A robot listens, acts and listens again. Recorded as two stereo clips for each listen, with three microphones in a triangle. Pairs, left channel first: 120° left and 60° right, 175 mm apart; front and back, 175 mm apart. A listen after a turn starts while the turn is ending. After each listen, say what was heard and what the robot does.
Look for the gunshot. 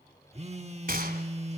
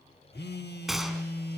The gunshot: 90° right. Turn 90° right.
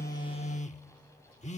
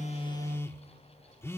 Facing where the gunshot came from. I can't hear it now.